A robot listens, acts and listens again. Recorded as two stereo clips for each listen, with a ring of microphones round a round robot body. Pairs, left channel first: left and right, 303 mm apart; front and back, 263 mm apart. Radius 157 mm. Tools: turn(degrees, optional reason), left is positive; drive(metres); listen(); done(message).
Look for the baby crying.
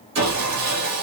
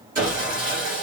listen()
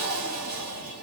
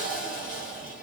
listen()
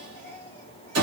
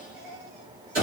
turn(degrees=175, reason="The baby crying: 175° left.")
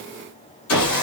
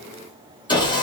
listen()
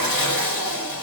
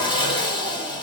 listen()
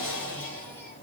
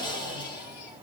done("Facing where the baby crying came from. I can't hear it now.")